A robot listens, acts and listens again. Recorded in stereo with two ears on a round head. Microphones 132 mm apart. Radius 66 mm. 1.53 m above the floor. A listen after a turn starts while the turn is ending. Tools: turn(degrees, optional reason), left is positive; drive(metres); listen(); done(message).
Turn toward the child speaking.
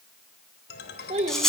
turn(degrees=-45, reason="The child speaking: about 45° right or 135° right.")
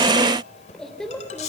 done("Facing the child speaking, 2 to 4 m away.")